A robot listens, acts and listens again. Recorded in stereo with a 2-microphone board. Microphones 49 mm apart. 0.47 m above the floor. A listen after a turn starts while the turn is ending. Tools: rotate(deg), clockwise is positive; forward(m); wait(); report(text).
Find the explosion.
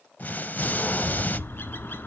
rotate(-40)
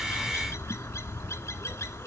wait()
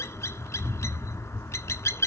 report("I heard an explosion, but can't make it out now. It was about straight ahead or 100° left.")